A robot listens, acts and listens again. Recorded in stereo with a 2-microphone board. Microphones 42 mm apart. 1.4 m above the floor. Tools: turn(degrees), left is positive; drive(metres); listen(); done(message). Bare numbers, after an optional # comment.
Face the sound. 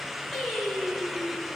turn(30)
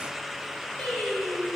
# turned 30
# So it is at 145° left.
turn(145)
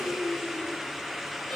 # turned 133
# The singing is now 10° left.
turn(10)
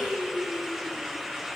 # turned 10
done("Facing the singing.")